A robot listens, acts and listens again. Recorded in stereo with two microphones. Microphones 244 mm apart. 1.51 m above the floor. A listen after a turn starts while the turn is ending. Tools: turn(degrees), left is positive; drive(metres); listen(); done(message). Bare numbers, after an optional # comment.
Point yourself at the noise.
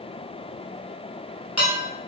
turn(90)
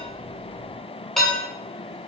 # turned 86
done("Facing the dishes clattering.")